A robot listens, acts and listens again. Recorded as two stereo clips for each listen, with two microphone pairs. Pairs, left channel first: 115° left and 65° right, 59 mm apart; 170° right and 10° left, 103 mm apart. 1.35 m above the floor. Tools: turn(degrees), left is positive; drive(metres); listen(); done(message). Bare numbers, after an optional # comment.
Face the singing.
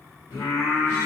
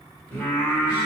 # The singing: 110° left.
turn(110)
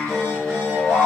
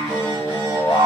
# The singing is now 10° right.
turn(-10)
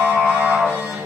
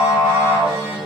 done("Found it: singing, straight ahead.")